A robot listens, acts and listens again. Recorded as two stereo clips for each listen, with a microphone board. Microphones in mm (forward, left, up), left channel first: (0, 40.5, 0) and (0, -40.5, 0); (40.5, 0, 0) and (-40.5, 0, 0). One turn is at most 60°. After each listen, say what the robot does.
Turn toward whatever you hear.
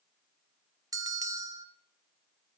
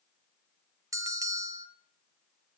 Turn 60° right.
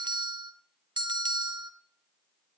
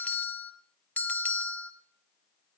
Turn 60° right.
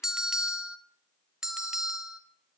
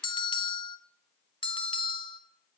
Turn 10° right.
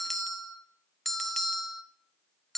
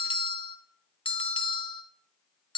Facing the bell.